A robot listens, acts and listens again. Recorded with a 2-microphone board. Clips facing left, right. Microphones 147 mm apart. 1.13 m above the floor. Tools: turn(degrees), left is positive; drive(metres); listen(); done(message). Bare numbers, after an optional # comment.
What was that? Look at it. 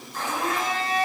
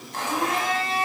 turn(-90)
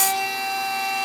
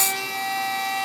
done("Found it: a blender, straight ahead, over 4 m away.")